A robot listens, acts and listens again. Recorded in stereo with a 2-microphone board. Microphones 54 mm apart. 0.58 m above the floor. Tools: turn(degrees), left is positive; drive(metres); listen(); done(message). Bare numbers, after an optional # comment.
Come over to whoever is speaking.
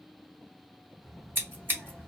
turn(30)
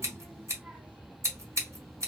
# So it is at 25° right.
turn(-25)
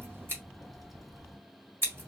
drive(1.0)
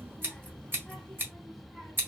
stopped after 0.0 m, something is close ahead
done("Something is in my way. I am facing the child speaking but have not reached it.")